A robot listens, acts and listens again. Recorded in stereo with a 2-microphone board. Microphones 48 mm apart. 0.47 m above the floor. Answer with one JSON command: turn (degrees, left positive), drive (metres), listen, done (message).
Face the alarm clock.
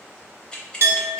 {"listen": true}
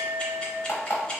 {"turn": 50}
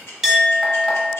{"listen": true}
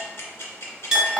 {"listen": true}
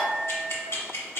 {"done": "I heard an alarm clock, but can't make it out now. It was about straight ahead or 80° left."}